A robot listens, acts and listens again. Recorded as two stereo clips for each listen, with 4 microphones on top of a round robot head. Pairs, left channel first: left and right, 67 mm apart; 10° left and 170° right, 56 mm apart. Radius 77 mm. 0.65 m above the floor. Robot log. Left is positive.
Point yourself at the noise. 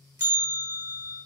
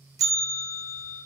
note: The bell: 150° right.
cmd yaw -150
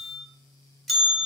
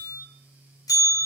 end: Facing the bell, under 1 m away.